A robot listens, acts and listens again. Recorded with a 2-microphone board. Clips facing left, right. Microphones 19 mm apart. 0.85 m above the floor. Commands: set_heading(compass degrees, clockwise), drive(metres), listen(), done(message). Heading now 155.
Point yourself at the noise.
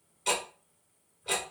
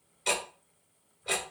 set_heading(185)
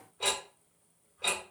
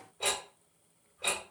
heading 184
set_heading(159)
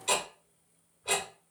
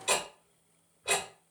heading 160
done("Facing the ticking.")